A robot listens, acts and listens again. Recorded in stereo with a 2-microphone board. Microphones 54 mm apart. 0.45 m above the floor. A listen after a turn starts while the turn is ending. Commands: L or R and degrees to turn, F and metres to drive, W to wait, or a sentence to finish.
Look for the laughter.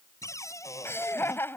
L45
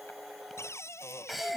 Found it: laughter, straight ahead.